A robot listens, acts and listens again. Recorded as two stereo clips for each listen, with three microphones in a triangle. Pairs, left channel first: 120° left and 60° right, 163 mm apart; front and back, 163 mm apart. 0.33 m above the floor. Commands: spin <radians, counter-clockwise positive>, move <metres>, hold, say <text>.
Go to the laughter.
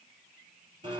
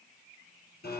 hold
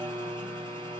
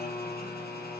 hold
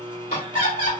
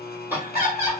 spin 1.92
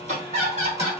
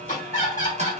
spin -0.44
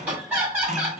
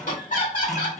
spin 0.35
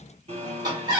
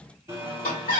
move 1.0
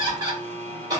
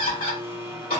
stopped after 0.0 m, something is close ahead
say Something is in my way. I am facing the laughter but have not reached it.